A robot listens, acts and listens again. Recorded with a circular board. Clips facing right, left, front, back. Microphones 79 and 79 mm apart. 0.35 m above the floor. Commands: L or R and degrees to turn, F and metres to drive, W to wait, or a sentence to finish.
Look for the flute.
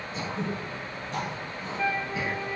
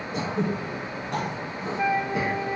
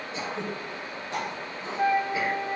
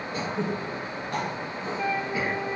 L30
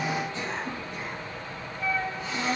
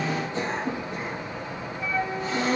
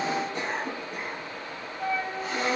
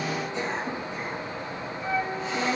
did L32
Facing the flute.